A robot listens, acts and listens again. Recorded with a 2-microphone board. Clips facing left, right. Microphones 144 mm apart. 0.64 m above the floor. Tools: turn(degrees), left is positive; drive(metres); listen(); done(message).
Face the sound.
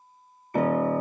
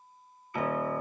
turn(degrees=45)
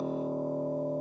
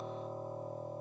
turn(degrees=75)
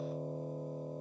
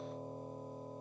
turn(degrees=35)
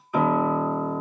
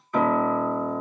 turn(degrees=10)
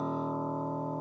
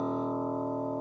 done("Facing the piano.")